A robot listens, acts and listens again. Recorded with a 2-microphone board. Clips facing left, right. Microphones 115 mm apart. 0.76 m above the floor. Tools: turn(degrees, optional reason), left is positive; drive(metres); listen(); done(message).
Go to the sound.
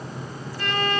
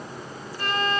turn(degrees=-40, reason="The violin: about 40° right or 140° right.")
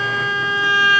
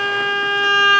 turn(degrees=-95, reason="So it is at 95° right.")
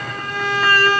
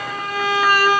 turn(degrees=-15, reason="The violin is now 15° right.")
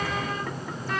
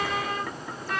drive(metres=1.0)
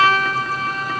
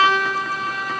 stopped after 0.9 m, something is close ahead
done("Arrived at the violin, straight ahead.")